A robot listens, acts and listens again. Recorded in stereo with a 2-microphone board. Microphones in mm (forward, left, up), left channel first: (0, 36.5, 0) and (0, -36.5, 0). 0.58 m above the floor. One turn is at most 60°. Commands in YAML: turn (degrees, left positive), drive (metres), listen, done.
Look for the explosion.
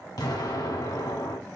turn: 60
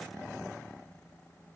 listen: true
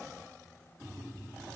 done: "I heard an explosion, but can't make it out now. It was about 5° left or 55° left."